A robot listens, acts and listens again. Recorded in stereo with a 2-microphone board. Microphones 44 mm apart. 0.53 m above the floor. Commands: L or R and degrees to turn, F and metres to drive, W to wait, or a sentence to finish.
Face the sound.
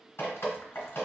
L65
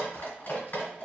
L45
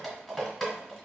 Facing the dripping.